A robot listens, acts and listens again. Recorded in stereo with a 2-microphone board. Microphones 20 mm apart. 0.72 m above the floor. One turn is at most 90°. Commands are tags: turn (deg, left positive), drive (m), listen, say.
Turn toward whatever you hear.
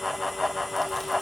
<listen/>
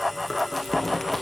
<turn deg="30"/>
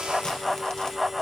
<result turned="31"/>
<listen/>
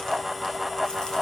<listen/>
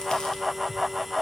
<say>I heard chewing, but can't make it out now. It was about 20° right or 140° left.</say>